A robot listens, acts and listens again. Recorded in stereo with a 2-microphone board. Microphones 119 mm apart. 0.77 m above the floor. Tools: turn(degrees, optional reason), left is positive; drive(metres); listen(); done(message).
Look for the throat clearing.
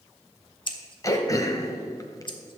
turn(degrees=30, reason="The throat clearing: about 30° left or 150° left.")
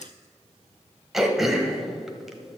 done("Found it: throat clearing, straight ahead, 1 to 2 m away.")